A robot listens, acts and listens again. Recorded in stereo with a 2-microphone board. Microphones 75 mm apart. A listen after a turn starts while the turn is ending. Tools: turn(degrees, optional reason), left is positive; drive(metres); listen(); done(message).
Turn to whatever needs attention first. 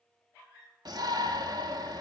turn(degrees=-65, reason="The shout: about 65° right or 115° right.")
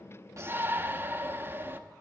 turn(degrees=-30, reason="So it is at 30° right.")
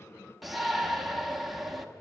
done("Found it: a shout, straight ahead, 1 to 2 m away.")